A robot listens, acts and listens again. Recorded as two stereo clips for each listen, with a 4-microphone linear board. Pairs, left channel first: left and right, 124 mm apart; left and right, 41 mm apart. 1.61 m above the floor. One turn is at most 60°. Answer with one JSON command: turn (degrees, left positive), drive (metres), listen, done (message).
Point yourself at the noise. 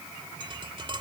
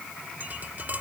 {"turn": -40}
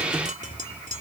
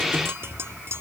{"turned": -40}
{"turn": -60}
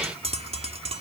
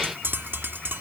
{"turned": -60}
{"turn": -55}
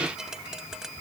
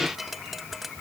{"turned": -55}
{"done": "Found it: tapping, straight ahead."}